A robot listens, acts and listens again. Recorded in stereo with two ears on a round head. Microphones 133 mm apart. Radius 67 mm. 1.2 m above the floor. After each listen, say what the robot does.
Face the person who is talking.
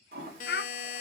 Turn 70° left.
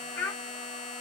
Turn 15° left.
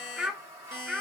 Found it: a child speaking, straight ahead, under 1 m away.